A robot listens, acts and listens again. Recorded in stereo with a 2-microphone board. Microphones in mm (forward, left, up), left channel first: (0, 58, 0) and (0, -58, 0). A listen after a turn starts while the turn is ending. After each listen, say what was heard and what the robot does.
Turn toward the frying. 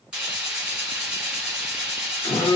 Turn 30° right.
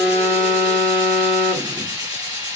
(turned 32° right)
So it is at 140° right. Turn 140° right.
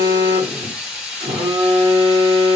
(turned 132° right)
The frying is now 10° right. Turn 10° right.
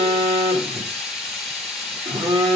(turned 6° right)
Facing the frying.